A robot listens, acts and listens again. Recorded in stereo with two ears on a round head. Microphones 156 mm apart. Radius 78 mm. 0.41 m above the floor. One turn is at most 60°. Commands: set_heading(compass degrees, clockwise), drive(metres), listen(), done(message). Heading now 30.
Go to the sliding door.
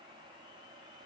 listen()
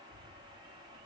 listen()
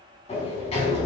set_heading(355)
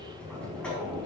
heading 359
drive(1.0)
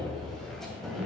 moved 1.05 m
drive(1.0)
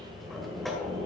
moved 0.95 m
drive(1.0)
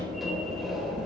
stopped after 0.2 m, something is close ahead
done("I am next to the sliding door.")